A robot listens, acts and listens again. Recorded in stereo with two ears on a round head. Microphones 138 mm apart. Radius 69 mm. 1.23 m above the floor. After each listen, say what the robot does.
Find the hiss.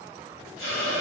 Turn 40° right.
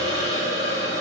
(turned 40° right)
Turn 95° right.
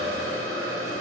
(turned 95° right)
Facing the hiss, 1 to 2 m away.